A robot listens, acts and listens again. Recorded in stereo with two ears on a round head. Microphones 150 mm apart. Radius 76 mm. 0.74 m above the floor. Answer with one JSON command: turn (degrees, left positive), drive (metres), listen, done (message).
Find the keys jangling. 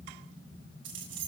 {"turn": -90}
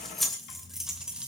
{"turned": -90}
{"done": "Found it: keys jangling, straight ahead."}